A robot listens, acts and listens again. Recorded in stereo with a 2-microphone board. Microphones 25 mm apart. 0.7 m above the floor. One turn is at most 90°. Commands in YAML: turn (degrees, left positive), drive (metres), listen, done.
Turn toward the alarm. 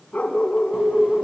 turn: -50
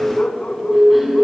turn: -60
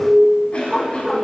turn: -15
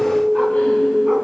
done: "Found it: an alarm, straight ahead, 2 to 4 m away."